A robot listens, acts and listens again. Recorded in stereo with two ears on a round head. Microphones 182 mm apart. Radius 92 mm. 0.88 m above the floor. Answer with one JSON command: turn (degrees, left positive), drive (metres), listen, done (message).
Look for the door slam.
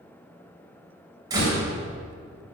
{"turn": -20}
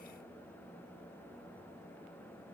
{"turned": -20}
{"listen": true}
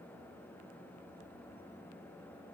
{"done": "I heard a door slam, but can't make it out now. It was about straight ahead or 140° right."}